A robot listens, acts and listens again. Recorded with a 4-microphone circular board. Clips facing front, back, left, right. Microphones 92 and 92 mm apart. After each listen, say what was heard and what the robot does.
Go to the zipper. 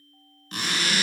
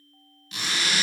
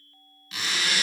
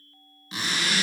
The zipper: 40° right. Turn 40° right.
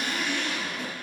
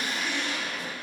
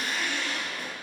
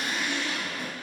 The zipper is now 20° right. Turn 20° right.
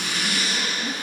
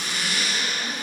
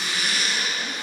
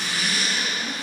Drive 1.0 m forward.
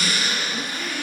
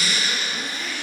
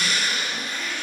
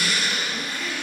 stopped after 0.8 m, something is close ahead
The zipper is now 10° right. Turn 10° right.
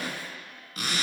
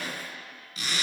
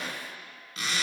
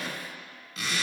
I am next to the zipper.